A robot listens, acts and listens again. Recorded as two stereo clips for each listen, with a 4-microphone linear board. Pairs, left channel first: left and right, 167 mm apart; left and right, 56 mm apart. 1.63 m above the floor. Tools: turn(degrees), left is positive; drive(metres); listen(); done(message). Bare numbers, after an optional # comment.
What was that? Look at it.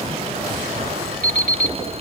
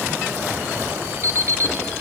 # The alarm clock: about 55° right or 125° right.
turn(-55)
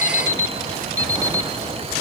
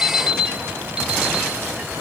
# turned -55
# So it is at 25° right.
turn(-25)
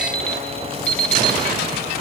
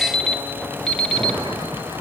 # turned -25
done("Found it: an alarm clock, straight ahead.")